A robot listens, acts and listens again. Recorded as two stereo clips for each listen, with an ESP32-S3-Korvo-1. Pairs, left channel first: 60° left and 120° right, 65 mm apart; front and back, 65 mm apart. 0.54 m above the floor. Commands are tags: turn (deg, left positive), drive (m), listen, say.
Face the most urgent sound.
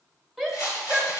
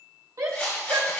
<turn deg="155"/>
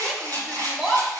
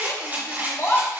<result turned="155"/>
<turn deg="-40"/>
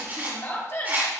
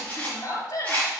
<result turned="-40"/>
<turn deg="15"/>
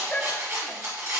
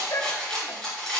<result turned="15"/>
<say>Found it: a shout, straight ahead.</say>